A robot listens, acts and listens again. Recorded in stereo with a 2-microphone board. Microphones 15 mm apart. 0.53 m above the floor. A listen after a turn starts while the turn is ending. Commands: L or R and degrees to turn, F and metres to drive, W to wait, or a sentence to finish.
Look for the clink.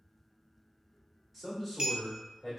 R65
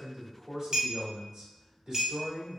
R45
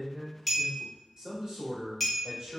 Found it: a clink, straight ahead, under 1 m away.